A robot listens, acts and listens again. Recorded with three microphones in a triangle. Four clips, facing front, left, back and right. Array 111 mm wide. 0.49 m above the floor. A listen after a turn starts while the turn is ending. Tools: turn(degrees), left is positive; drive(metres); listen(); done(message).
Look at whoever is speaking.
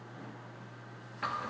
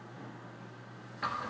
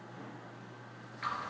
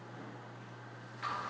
listen()
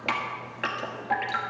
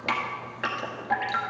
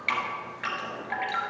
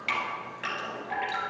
listen()
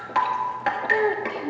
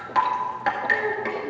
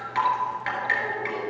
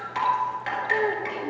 turn(degrees=-20)
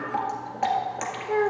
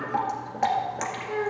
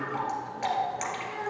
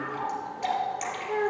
done("Facing the child speaking, under 1 m away.")